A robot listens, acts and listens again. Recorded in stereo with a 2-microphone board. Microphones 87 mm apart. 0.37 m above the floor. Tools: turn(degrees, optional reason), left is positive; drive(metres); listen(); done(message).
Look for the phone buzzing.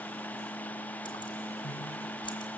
listen()
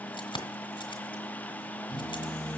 turn(degrees=-45, reason="The phone buzzing: about 45° right or 135° right.")
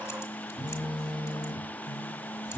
turn(degrees=-85, reason="So it is at 85° right.")
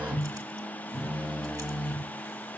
turn(degrees=-15, reason="The phone buzzing is now 15° right.")
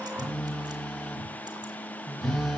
done("Found it: a phone buzzing, straight ahead, over 4 m away.")